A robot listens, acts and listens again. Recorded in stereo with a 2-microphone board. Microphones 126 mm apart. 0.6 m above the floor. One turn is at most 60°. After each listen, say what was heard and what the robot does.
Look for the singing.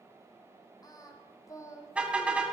The singing: about 25° left or 155° left. Turn 25° left.
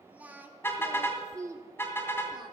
So it is at 30° right. Turn 30° right.
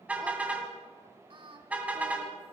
The singing is now 45° right. Turn 45° right.
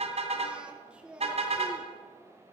The singing is now 10° right. Turn 10° right.
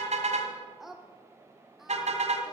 Found it: singing, straight ahead, 1 to 2 m away.